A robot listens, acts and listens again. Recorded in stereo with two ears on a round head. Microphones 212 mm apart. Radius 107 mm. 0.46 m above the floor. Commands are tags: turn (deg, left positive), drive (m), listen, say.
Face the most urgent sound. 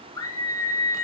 <turn deg="30"/>
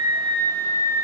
<turn deg="-15"/>
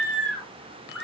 <say>Found it: a scream, straight ahead, over 4 m away.</say>